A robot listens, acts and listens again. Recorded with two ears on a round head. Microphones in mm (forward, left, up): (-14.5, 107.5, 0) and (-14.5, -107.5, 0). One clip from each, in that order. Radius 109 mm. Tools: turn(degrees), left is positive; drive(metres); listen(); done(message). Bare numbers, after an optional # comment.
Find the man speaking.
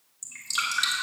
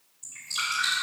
listen()
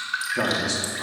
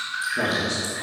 turn(90)
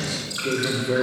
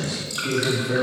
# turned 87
done("Facing the man speaking, 2 to 4 m away.")